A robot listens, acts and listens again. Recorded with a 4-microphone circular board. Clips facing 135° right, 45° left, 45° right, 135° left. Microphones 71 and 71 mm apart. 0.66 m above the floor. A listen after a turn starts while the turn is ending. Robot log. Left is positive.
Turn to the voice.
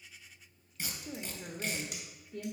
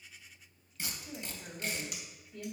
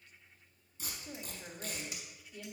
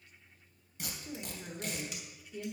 note: The woman speaking: 150° right.
cmd yaw -150
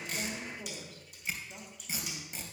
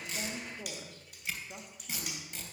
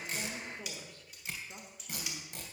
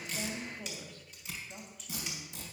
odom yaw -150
end: Found it: a woman speaking, straight ahead.